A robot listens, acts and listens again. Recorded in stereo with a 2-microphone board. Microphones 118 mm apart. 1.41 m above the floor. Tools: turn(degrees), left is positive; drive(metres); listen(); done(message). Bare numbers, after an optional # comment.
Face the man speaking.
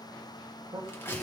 # The man speaking: about 35° right or 145° right.
turn(-35)
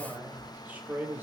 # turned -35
# So it is at 20° right.
turn(-20)
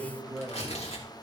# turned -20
# The man speaking is now 10° right.
turn(-10)
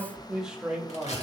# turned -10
# The man speaking is now 10° right.
turn(-10)
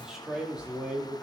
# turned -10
# The man speaking is now 10° right.
turn(-10)
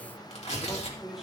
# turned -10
done("Found it: a man speaking, straight ahead, 2 to 4 m away.")